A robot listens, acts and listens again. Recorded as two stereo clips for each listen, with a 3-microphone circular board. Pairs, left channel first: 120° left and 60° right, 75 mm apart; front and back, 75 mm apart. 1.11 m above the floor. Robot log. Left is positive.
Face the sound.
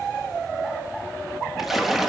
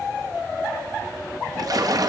note: The splash: 150° right.
cmd yaw -150
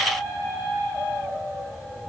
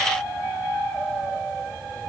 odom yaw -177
note: Nothing new. It was at 30° left.
cmd yaw +30
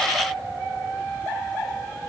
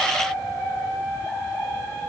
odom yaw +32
end: I heard a splash from this way, but can't make it out now.